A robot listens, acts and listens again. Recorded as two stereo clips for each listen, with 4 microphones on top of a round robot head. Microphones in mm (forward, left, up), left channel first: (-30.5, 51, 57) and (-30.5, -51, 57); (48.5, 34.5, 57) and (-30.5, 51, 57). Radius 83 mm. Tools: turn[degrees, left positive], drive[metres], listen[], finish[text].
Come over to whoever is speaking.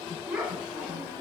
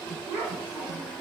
Thought: The child speaking: 170° right.
Action: turn[-170]
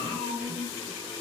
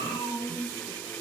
Thought: The child speaking is now 30° left.
Action: turn[30]
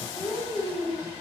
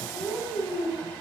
Action: drive[1.0]
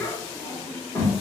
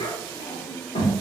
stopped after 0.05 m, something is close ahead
Thought: The child speaking is now 10° left.
Action: turn[10]
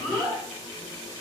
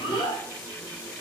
Action: finish[Something is in my way. I am facing the child speaking but have not reached it.]